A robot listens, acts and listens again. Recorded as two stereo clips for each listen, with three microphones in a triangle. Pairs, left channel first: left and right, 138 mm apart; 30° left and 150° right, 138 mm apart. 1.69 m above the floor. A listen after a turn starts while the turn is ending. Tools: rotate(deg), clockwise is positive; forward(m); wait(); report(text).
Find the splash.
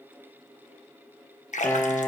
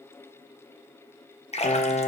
rotate(-65)
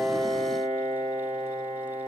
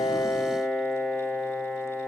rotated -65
report("Facing where the splash came from. I can't hear it now.")